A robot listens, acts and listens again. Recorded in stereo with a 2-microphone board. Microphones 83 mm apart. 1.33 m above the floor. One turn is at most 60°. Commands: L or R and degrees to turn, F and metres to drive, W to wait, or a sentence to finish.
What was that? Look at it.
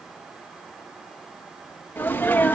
L20
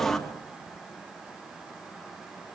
Found it: a sneeze, straight ahead.